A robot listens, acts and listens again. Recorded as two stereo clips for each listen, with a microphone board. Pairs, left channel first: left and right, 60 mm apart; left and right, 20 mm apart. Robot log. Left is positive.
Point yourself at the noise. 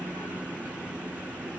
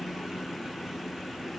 cmd idle
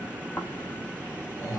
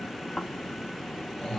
note: The snoring: about 70° left or 110° left.
cmd yaw +70
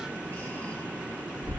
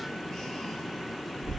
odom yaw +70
note: So it is at 35° left.
cmd yaw +35
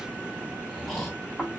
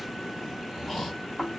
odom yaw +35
end: Facing the snoring, 1 to 2 m away.